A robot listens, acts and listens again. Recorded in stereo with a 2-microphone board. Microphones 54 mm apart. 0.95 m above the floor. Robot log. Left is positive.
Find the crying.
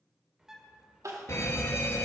note: The crying: about 75° right or 105° right.
cmd yaw -75
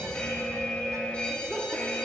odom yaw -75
cmd idle
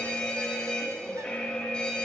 cmd idle
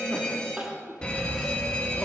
note: So it is at 15° right.
cmd yaw -15
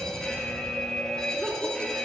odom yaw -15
cmd idle
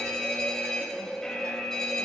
cmd idle
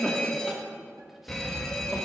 end: Facing the crying, 2 to 4 m away.